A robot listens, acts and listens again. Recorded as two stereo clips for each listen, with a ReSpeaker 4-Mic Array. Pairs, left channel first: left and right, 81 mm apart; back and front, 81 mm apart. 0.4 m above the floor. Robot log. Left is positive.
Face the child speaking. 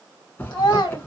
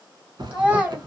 note: The child speaking: 70° left.
cmd yaw +70
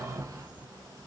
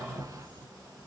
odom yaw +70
cmd idle
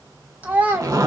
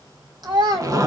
note: The child speaking is now 25° right.
cmd yaw -25
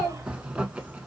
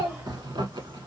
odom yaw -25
note: The child speaking is now 10° right.
cmd yaw -10
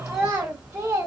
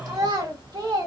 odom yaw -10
note: The child speaking is now 25° right.
cmd yaw -25
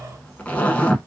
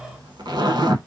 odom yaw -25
cmd idle
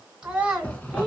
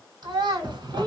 end: Found it: a child speaking, straight ahead.